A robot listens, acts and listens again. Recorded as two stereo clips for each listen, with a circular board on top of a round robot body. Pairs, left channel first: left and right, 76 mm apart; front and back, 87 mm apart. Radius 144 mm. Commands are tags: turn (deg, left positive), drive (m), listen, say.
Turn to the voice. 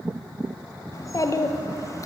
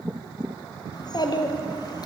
<turn deg="45"/>
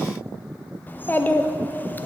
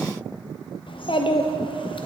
<turn deg="25"/>
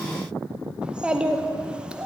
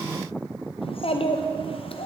<turn deg="-10"/>
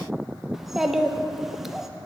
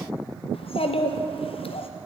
<say>Facing the child speaking.</say>